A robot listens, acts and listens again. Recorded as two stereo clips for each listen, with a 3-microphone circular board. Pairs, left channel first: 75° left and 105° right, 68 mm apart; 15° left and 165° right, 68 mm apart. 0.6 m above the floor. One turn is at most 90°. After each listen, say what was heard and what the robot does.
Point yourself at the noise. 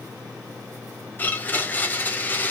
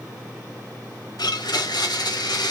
The blender: 10° left. Turn 10° left.
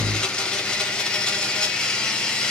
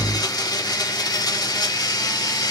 Facing the blender, under 1 m away.